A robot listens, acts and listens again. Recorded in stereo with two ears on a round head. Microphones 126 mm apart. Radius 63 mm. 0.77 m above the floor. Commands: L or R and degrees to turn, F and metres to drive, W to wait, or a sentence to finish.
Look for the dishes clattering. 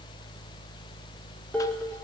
L30
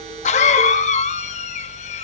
W
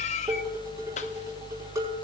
R25
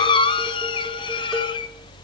W
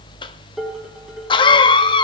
Found it: dishes clattering, straight ahead.